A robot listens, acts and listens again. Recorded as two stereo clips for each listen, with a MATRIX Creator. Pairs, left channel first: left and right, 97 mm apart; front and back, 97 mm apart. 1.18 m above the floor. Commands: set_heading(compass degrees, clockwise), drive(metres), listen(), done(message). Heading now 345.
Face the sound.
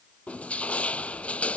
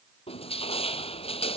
set_heading(335)
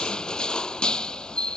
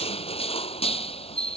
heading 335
set_heading(325)
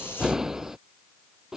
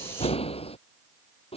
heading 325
done("Facing the crushing.")